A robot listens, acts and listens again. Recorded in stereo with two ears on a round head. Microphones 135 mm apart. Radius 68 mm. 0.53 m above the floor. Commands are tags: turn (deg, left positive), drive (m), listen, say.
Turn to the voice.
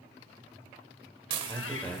<turn deg="30"/>
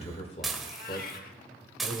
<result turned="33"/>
<turn deg="130"/>
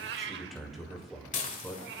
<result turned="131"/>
<say>Found it: a man speaking, straight ahead.</say>